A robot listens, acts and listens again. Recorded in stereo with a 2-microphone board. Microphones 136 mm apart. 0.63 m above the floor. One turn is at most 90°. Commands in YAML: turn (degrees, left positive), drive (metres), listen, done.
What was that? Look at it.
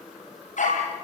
turn: 60
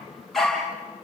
done: "Facing the dog barking, over 4 m away."